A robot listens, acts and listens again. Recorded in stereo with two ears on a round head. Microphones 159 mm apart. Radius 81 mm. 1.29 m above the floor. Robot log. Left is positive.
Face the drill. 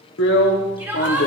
note: The drill: about 70° left or 110° left.
cmd yaw +70
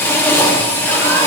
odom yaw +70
note: So it is at 15° left.
cmd yaw +15
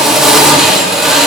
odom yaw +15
end: Facing the drill, 1 to 2 m away.